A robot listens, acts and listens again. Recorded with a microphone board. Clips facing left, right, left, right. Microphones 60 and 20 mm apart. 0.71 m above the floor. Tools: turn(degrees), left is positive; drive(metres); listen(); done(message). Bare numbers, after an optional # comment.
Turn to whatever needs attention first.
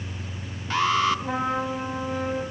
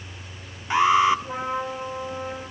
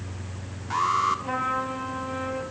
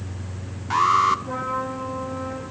# The alarm: about 20° right or 160° right.
turn(-20)
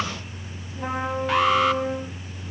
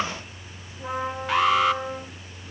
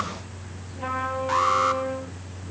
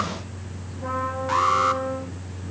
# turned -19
done("Found it: an alarm, straight ahead.")